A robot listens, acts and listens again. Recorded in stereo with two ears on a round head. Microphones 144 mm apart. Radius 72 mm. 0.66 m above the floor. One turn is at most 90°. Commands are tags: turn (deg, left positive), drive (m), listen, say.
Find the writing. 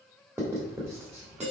<turn deg="-15"/>
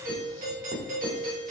<turn deg="-90"/>
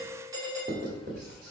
<turn deg="-65"/>
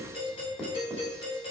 <say>Facing the writing, 1 to 2 m away.</say>